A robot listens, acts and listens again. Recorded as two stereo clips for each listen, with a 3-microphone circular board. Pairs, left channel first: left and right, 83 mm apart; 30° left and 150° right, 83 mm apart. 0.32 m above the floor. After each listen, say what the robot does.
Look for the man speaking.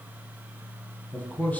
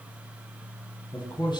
Turn 25° left.
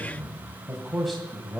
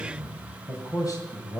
Found it: a man speaking, straight ahead, 1 to 2 m away.